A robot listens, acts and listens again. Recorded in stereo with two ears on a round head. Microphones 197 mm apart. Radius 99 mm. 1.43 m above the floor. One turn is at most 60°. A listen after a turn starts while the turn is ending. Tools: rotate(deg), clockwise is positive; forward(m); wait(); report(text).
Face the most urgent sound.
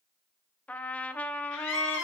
rotate(-60)
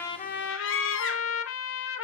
rotate(-60)
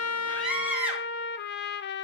report("Facing the scream, 2 to 4 m away.")